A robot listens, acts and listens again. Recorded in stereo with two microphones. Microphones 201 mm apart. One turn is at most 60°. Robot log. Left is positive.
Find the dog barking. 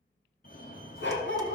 note: The dog barking: about 70° left or 110° left.
cmd yaw +60
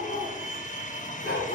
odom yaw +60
note: So it is at 50° left.
cmd yaw +50
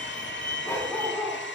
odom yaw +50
note: The dog barking is now 15° left.
cmd yaw +15
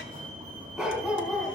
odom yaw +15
end: Found it: a dog barking, straight ahead.